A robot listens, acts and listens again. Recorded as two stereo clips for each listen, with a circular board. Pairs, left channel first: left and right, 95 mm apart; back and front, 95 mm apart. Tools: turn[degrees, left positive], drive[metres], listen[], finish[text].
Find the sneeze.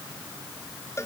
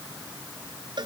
Action: listen[]
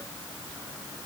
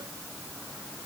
Action: listen[]
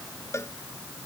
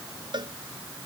Action: finish[I can't make out a sneeze to turn to.]